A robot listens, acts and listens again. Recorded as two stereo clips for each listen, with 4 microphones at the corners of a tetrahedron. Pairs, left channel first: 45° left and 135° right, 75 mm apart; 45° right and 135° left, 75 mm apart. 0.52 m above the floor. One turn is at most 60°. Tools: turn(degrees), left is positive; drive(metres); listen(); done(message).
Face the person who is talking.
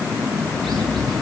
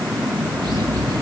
listen()
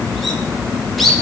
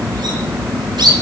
listen()
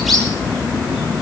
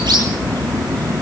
done("I can't make out anyone speaking to turn to.")